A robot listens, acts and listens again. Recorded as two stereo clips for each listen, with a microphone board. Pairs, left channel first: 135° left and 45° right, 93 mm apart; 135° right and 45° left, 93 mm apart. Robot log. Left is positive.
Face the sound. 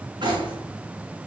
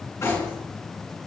note: The cutlery clinking: 75° right.
cmd yaw -75
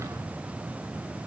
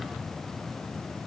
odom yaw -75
cmd idle
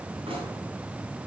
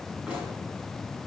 note: The cutlery clinking is now 30° right.
cmd yaw -30
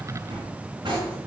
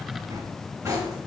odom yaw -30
note: The cutlery clinking is now 10° right.
cmd yaw -10
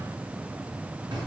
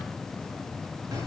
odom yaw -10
end: Found it: cutlery clinking, straight ahead.